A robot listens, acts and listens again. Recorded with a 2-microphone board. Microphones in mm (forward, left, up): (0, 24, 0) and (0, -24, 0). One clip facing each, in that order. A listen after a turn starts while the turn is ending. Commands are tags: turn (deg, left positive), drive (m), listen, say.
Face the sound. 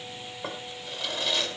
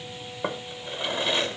<turn deg="-25"/>
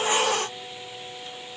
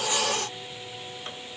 <listen/>
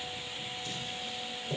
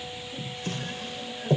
<turn deg="-125"/>
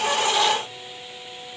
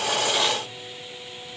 <listen/>
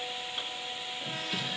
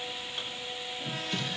<say>Facing the drawer, 1 to 2 m away.</say>